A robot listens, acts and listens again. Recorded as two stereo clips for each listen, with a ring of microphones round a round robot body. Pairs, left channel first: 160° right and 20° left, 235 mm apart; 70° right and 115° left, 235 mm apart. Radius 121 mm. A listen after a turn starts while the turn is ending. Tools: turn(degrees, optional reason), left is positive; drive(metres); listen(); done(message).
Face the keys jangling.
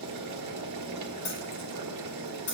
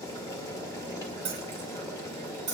turn(degrees=175, reason="The keys jangling: 175° left.")
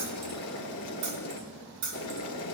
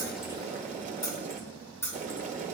turn(degrees=10, reason="The keys jangling is now 10° left.")
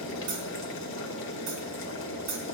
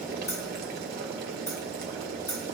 turn(degrees=10, reason="The keys jangling is now 10° left.")
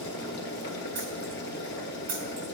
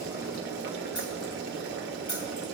done("Found it: keys jangling, straight ahead.")